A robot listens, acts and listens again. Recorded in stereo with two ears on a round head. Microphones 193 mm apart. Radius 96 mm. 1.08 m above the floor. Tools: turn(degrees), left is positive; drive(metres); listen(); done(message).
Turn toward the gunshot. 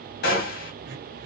turn(degrees=45)
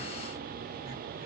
listen()
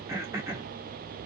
done("I heard a gunshot, but can't make it out now. It was about straight ahead or 90° left.")